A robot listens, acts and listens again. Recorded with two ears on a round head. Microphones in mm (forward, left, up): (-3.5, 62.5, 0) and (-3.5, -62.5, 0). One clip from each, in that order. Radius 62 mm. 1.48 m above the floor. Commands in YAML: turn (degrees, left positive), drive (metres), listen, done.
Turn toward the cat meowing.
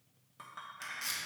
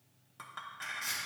listen: true
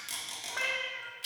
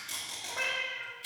turn: 45
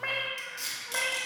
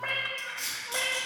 done: "Facing the cat meowing, 1 to 2 m away."